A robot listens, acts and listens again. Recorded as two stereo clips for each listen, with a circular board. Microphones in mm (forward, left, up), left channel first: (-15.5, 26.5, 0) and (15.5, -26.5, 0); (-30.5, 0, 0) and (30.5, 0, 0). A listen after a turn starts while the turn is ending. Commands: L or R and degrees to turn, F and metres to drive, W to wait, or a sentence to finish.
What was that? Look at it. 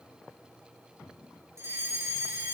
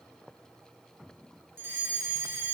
R40
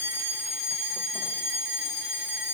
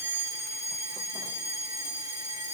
Facing the fire alarm.